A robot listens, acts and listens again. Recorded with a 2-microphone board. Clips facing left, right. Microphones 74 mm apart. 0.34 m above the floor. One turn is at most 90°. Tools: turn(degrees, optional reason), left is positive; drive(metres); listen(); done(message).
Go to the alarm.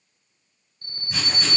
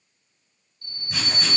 turn(degrees=40, reason="The alarm: about 40° left or 140° left.")
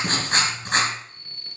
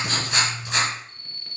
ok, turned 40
drive(metres=1.0)
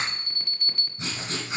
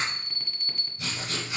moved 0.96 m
drive(metres=1.0)
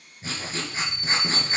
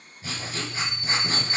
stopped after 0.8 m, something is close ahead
done("Arrived at the alarm, straight ahead.")